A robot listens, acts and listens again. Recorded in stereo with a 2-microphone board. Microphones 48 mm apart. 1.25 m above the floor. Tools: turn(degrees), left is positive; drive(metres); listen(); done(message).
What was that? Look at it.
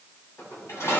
turn(degrees=90)
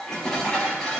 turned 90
turn(degrees=10)
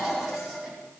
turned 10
done("Facing the dishes clattering, over 4 m away.")